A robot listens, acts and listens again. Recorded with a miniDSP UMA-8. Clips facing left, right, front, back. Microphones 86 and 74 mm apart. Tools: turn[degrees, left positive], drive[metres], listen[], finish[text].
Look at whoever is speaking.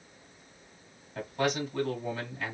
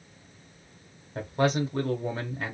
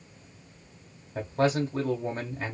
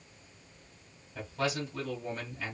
Thought: The man speaking: 40° right.
Action: turn[-40]
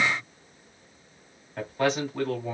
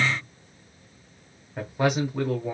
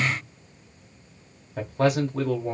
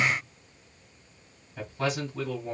Thought: The man speaking is now 15° right.
Action: turn[-15]
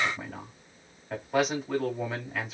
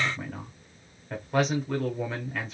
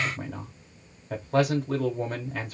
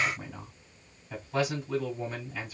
Action: finish[Found it: a man speaking, straight ahead, 1 to 2 m away.]